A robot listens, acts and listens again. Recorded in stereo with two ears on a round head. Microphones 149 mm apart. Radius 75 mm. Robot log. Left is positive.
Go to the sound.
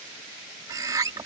note: The bird: about 20° right or 160° right.
cmd yaw -20
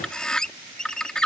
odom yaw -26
cmd fwd 1.0
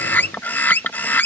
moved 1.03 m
note: The bird is now 10° left.
cmd yaw +10
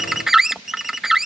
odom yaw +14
cmd fwd 1.0
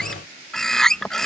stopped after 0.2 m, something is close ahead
end: I am next to the bird.